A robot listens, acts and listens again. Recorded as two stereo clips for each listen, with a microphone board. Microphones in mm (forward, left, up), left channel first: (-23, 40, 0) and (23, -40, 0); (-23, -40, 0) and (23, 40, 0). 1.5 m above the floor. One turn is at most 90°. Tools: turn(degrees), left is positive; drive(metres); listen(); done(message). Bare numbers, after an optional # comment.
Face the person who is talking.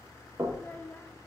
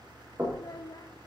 # The child speaking: 165° right.
turn(-90)
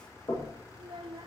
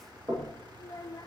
# The child speaking is now 75° right.
turn(-75)
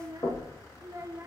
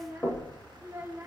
done("Found it: a child speaking, straight ahead, under 1 m away.")